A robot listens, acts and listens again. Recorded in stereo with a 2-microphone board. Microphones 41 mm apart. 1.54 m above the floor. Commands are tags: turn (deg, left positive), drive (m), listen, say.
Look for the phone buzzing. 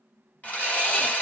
<listen/>
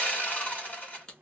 <listen/>
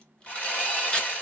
<say>I can't make out a phone buzzing to turn to.</say>